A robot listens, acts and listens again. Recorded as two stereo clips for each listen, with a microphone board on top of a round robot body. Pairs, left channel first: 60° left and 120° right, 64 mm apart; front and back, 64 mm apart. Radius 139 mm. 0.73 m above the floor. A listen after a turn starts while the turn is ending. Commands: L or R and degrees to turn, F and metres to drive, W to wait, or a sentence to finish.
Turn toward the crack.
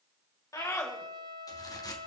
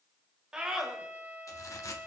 L40
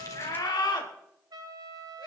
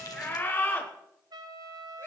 Facing where the crack came from. I can't hear it now.